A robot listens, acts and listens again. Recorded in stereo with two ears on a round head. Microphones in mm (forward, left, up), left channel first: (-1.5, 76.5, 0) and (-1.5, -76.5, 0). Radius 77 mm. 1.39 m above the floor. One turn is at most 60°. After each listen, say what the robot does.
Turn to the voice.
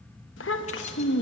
Turn 60° left.
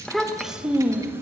Turn 15° right.
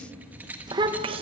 Turn 35° right.
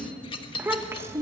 Turn 15° right.
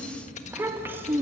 Turn 15° right.
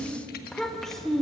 Found it: a child speaking, straight ahead, 1 to 2 m away.